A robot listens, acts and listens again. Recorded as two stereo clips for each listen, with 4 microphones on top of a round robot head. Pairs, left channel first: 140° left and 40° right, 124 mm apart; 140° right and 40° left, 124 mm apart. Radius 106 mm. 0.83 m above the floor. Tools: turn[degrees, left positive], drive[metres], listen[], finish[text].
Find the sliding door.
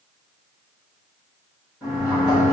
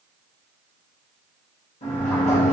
Thought: The sliding door: 125° right.
Action: turn[-125]
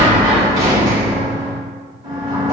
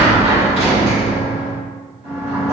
Thought: The sliding door is now 20° left.
Action: turn[20]
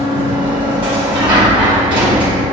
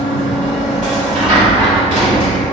Action: finish[Found it: a sliding door, straight ahead, 1 to 2 m away.]